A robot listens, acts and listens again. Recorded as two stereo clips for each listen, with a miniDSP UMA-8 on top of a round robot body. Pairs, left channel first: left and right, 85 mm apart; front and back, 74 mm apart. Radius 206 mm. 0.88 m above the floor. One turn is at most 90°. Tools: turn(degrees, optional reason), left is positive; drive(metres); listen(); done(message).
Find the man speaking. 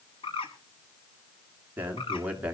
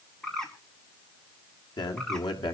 turn(degrees=-15, reason="The man speaking: 15° right.")
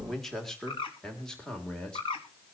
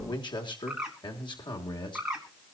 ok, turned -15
turn(degrees=10, reason="The man speaking is now 10° left.")
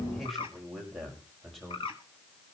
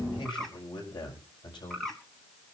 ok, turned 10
done("Found it: a man speaking, straight ahead.")